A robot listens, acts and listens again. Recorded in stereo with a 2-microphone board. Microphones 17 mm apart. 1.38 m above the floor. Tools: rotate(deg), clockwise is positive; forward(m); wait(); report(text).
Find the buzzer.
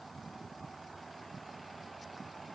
wait()
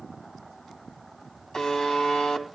rotate(-55)
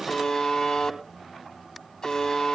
rotate(-60)
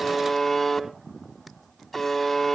report("Facing the buzzer, 2 to 4 m away.")